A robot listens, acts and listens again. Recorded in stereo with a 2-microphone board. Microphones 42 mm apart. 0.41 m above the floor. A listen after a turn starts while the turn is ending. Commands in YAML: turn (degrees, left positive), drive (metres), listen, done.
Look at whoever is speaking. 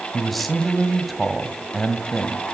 turn: 30
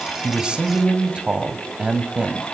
turn: -30
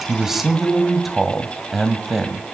done: "Facing the man speaking."